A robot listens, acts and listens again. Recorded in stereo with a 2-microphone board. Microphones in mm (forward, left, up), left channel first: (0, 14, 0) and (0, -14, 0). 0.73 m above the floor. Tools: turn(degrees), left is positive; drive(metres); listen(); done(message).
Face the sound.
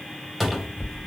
turn(degrees=30)
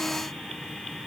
listen()
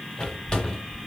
turn(degrees=145)
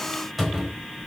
done("Facing the cupboard door.")